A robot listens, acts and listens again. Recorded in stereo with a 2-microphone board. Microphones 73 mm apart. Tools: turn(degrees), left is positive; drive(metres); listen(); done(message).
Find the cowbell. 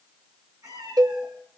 turn(degrees=-65)
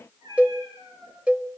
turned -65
turn(degrees=-20)
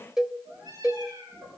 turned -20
done("Facing the cowbell.")